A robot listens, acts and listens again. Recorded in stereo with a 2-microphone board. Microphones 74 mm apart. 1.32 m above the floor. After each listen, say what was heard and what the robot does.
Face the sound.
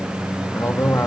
The man speaking: about 40° left or 140° left. Turn 40° left.
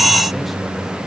Keep listening.
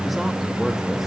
Keep listening.
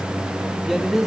Facing the man speaking, 2 to 4 m away.